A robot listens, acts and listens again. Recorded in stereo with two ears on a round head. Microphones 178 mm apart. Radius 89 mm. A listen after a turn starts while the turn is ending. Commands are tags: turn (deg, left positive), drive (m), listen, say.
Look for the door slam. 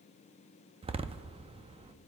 <turn deg="-30"/>
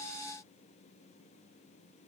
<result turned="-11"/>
<listen/>
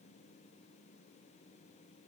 <say>I heard a door slam, but can't make it out now. It was about 15° right or 140° right.</say>